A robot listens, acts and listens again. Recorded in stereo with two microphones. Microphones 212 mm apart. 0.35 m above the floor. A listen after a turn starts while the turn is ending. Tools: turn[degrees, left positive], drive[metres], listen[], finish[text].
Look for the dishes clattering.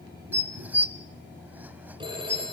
Action: turn[-30]
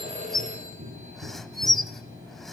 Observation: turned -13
Action: finish[Facing the dishes clattering, 1 to 2 m away.]